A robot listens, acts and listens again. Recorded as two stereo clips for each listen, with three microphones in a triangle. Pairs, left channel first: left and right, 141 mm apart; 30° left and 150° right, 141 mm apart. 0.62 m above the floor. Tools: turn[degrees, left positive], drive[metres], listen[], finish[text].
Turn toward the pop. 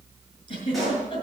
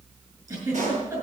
Thought: The pop: straight behind.
Action: turn[180]
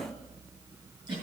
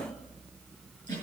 Action: finish[Facing where the pop came from. I can't hear it now.]